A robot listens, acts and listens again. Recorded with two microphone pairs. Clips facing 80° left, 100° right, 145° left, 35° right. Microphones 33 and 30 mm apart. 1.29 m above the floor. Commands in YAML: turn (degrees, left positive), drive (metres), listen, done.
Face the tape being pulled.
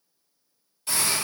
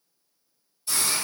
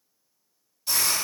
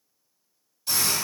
listen: true
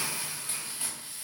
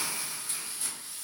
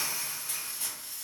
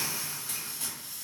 listen: true
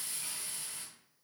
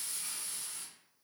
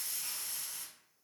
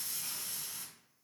done: "I can't make out tape being pulled to turn to."